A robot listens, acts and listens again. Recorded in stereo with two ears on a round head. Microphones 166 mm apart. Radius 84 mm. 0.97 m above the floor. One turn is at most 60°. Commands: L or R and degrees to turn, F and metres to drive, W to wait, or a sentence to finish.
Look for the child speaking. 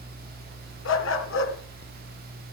W
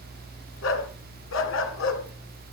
W
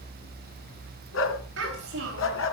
R60
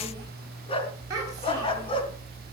R20
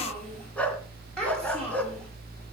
Found it: a child speaking, straight ahead, over 4 m away.